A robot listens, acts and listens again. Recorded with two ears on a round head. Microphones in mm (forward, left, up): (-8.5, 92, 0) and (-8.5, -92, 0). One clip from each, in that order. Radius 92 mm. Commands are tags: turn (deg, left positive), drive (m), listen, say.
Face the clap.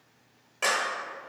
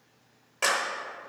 <turn deg="-30"/>
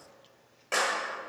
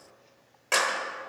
<turn deg="-135"/>
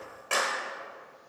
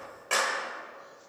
<say>Facing the clap.</say>